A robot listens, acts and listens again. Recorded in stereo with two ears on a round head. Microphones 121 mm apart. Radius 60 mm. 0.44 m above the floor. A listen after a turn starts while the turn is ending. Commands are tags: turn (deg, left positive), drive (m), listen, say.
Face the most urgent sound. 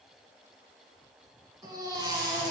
<turn deg="-30"/>
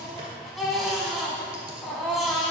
<say>Facing the baby crying.</say>